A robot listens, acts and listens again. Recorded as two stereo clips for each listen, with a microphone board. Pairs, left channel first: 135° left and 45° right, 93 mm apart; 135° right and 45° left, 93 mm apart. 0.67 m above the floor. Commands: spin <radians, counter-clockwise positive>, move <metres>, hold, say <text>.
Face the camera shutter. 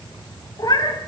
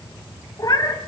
hold
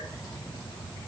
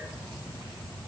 hold
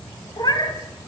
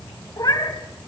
say I can't make out a camera shutter, only a cat meowing.